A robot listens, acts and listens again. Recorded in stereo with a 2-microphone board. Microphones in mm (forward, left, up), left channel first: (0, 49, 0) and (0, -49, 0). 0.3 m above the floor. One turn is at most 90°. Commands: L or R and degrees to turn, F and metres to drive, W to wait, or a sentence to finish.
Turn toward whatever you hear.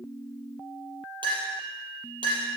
R55
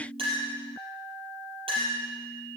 R70
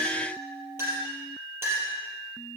R25
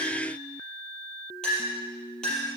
L10
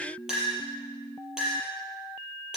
Found it: a clink, straight ahead.